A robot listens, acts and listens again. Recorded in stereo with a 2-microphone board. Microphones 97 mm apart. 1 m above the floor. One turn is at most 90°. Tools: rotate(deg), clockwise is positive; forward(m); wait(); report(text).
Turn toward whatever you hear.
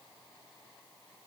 wait()
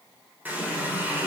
rotate(20)
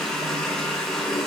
report("Facing the running tap, 2 to 4 m away.")